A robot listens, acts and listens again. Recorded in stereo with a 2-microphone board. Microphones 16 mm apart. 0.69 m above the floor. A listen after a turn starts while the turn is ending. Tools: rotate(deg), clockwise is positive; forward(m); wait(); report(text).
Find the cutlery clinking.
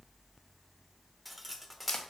rotate(-30)
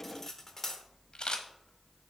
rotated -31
rotate(-150)
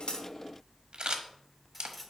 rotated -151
wait()
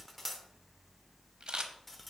report("Facing the cutlery clinking.")